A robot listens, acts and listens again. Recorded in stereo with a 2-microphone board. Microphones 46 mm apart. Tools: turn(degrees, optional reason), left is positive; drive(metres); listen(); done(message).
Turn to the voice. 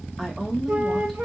turn(degrees=30)
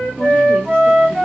listen()
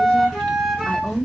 turn(degrees=145, reason="So it is at 145° left.")
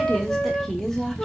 turn(degrees=10, reason="The woman speaking is now 10° left.")
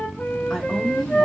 done("Facing the woman speaking.")